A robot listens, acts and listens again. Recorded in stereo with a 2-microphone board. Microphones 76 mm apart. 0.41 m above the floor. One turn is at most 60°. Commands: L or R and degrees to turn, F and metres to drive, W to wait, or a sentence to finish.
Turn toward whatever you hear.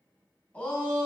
L15
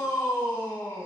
L60
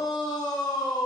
L60
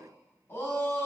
L30
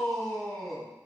Facing the shout.